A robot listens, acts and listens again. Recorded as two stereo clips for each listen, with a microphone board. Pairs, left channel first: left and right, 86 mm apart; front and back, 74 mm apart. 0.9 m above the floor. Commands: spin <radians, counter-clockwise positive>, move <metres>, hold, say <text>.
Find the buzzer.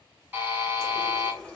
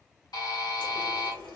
spin -0.44
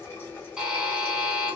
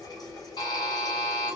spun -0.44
say Found it: a buzzer, straight ahead, 1 to 2 m away.